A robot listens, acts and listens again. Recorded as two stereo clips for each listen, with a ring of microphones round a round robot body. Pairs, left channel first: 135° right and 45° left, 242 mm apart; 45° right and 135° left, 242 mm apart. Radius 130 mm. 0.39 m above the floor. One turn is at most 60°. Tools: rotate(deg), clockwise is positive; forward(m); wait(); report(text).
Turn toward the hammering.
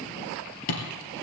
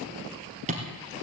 rotate(60)
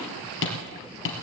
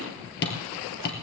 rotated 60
rotate(60)
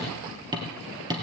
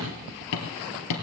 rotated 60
rotate(30)
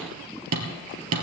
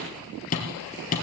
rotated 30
rotate(-15)
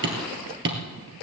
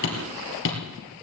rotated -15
report("Found it: hammering, straight ahead, 2 to 4 m away.")